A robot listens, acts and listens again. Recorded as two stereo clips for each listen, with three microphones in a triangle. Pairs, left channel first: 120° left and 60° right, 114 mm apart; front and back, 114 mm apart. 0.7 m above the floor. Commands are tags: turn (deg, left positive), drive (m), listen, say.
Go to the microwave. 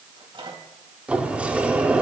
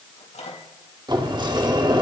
<turn deg="-15"/>
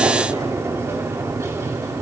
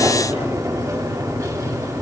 <listen/>
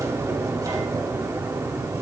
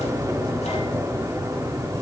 <listen/>
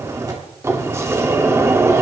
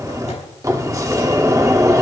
<say>Facing where the microwave came from. I can't hear it now. I did not reach it.</say>